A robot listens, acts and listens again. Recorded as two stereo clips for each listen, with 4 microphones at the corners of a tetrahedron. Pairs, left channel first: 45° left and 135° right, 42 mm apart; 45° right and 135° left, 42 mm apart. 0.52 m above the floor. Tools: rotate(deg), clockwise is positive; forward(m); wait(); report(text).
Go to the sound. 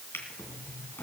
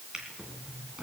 rotate(-65)
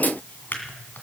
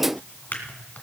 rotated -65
forward(1.0)
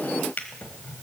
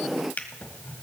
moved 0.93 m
forward(1.0)
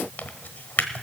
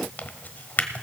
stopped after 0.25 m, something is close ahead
report("I am next to the drawer.")